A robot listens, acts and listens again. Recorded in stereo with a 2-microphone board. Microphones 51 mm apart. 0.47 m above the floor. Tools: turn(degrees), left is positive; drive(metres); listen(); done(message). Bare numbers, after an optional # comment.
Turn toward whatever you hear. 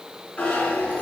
# The zipper: about 30° left or 150° left.
turn(30)
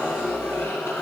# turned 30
# So it is at 125° left.
turn(125)
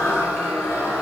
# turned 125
# The zipper is now 50° left.
turn(50)
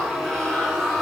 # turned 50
done("Facing the zipper, 2 to 4 m away.")